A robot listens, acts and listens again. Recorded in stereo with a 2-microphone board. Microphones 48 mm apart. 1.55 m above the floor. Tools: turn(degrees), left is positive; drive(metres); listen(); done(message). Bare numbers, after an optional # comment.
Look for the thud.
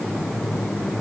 listen()
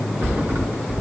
# The thud: about 50° right or 130° right.
turn(-50)
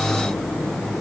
listen()
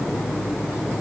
done("I heard a thud, but can't make it out now. It was about straight ahead or 80° right.")